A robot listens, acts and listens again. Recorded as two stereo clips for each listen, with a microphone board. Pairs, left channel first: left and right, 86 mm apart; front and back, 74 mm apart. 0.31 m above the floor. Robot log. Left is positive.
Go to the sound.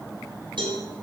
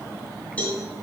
note: The cowbell: 65° right.
cmd yaw -65
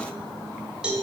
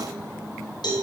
note: The cowbell is now 10° right.
cmd yaw -10
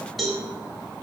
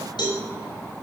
cmd fwd 1.0
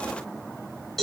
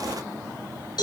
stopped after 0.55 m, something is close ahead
end: Blocked. The cowbell is further on, straight ahead.